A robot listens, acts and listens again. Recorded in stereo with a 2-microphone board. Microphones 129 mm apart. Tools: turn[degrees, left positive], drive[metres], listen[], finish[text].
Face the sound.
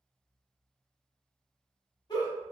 Thought: The giggle: about 40° left or 140° left.
Action: turn[40]
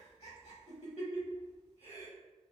Thought: So it is at 100° left.
Action: turn[100]
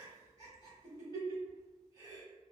Thought: The giggle is now 40° left.
Action: turn[40]
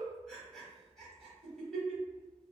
Action: finish[Facing the giggle, 1 to 2 m away.]